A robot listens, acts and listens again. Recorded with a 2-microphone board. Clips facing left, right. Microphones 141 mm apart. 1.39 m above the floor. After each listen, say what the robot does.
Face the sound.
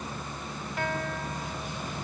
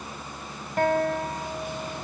Turn 40° right.
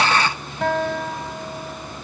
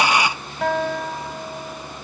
Facing the guitar.